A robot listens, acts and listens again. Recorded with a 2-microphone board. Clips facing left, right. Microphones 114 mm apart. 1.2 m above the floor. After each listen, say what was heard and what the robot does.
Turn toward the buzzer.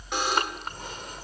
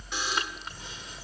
The buzzer: about 70° left or 110° left. Turn 70° left.
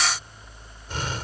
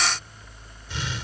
Keep listening.
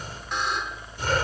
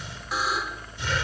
Found it: a buzzer, straight ahead.